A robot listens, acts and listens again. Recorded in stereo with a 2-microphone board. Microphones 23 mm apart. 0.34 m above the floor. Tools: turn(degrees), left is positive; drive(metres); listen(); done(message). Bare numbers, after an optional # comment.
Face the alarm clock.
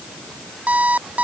turn(-90)
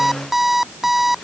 # So it is at 10° right.
turn(-10)
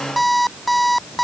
done("Facing the alarm clock.")